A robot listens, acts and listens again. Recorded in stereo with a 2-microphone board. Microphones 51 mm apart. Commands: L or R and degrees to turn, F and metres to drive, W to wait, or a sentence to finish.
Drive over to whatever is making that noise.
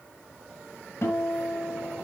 L65
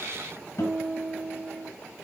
L55
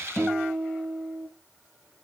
F1.0
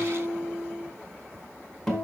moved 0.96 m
F1.0
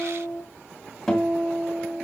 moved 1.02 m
L10
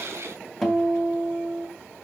F1.0
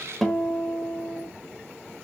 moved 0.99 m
F1.0
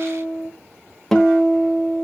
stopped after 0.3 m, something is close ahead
L10
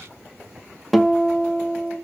I am next to the guitar.